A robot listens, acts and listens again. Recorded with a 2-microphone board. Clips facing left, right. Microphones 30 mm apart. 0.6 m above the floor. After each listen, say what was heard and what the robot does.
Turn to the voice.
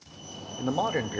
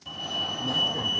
The man speaking: about 60° left or 120° left. Turn 60° left.
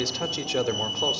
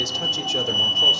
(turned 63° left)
So it is at 20° left. Turn 20° left.
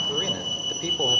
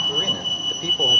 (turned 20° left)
Keep listening.
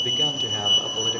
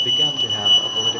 Keep listening.
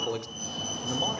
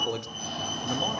Facing the man speaking, 1 to 2 m away.